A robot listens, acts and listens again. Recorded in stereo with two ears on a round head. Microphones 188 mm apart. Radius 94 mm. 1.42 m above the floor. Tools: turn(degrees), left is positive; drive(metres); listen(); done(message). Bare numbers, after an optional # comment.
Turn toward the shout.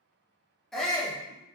turn(30)
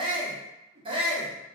# So it is at 25° right.
turn(-25)
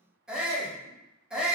done("Found it: a shout, straight ahead.")